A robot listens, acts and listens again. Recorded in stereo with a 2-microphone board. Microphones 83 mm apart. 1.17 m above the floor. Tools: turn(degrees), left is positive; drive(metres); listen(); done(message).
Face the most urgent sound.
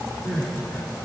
turn(degrees=35)
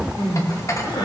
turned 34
turn(degrees=110)
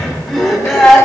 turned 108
done("Facing the crying.")